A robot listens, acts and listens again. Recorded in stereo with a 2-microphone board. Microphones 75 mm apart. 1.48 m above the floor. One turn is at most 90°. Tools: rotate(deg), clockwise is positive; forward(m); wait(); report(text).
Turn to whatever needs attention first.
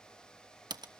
wait()
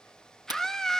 rotate(-30)
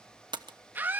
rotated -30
rotate(25)
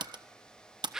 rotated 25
report("Facing the scream, 2 to 4 m away.")